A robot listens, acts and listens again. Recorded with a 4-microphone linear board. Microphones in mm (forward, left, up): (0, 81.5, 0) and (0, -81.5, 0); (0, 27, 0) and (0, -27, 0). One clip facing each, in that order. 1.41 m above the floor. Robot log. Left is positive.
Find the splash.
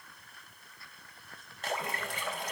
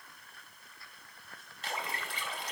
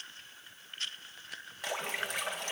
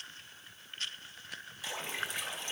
note: The splash: about 50° left or 130° left.
cmd yaw +50
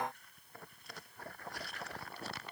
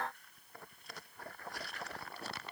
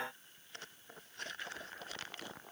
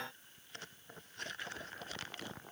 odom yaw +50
cmd idle
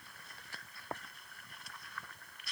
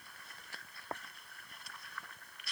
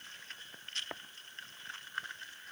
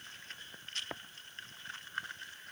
end: I heard a splash, but can't make it out now. It was about straight ahead or 80° left.